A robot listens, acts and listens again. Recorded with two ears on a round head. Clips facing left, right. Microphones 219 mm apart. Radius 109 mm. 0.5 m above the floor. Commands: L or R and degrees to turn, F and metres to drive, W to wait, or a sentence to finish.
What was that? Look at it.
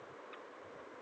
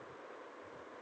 W
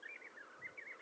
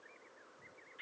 W
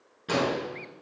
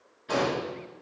L90
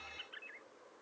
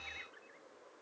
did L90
I heard an explosion from this way, but can't make it out now.